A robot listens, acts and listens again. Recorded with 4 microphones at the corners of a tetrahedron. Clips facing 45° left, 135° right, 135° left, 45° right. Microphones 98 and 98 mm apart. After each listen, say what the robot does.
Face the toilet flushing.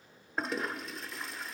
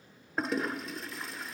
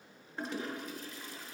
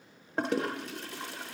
Turn 45° right.
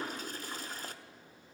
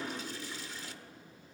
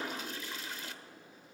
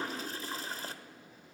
Facing the toilet flushing, 1 to 2 m away.